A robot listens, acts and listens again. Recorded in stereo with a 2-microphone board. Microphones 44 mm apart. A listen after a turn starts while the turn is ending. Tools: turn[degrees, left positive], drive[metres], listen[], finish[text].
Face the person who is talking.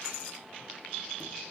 Action: listen[]
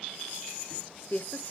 Thought: The woman speaking: about 45° left or 135° left.
Action: turn[45]
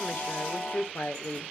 Thought: So it is at 80° left.
Action: turn[80]
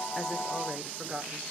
Thought: The woman speaking is now 15° right.
Action: turn[-15]
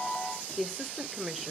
Action: finish[Found it: a woman speaking, straight ahead, 1 to 2 m away.]